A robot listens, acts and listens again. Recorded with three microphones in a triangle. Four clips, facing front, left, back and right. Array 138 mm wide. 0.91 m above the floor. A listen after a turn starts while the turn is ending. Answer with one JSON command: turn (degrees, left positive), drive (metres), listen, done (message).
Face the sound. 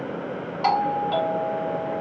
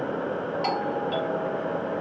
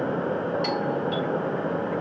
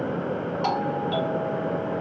{"done": "Facing the doorbell."}